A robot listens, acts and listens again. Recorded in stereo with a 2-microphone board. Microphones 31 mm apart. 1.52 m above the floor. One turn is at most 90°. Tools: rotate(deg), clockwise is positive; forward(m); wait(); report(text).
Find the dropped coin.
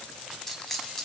rotate(-30)
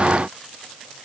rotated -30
wait()
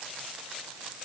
report("I heard a dropped coin, but can't make it out now. It was about 20° right or 140° left.")